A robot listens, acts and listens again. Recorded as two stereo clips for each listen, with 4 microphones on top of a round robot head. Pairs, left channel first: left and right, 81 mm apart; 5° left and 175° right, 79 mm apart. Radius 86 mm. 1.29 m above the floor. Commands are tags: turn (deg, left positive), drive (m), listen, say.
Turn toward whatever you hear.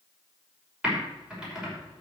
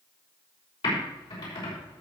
<turn deg="-10"/>
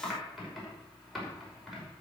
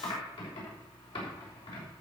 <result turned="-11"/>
<say>Facing the typing on a keyboard, over 4 m away.</say>